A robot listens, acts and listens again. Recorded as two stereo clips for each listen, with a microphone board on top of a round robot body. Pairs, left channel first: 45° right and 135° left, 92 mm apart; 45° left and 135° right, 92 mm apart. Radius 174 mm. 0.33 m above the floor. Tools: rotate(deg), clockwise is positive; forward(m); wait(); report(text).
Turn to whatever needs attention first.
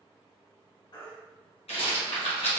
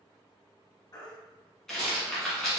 report("Facing the baby crying.")